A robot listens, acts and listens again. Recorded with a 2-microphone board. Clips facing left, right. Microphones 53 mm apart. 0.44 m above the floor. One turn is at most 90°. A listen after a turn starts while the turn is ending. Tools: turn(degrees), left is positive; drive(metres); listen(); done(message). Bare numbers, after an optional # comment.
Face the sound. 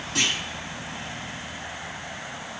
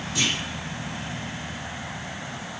# The clunk: about 55° left or 125° left.
turn(55)
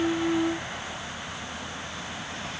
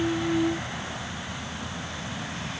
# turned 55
listen()
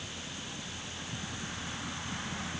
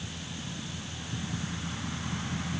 done("I heard a clunk, but can't make it out now. It was about straight ahead or 70° left.")